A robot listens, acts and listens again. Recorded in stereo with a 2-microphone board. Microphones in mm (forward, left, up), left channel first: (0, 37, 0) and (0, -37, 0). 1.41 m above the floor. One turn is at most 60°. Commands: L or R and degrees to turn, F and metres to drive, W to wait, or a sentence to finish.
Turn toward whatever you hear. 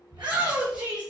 R60
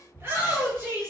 R30
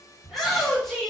Found it: a shout, straight ahead.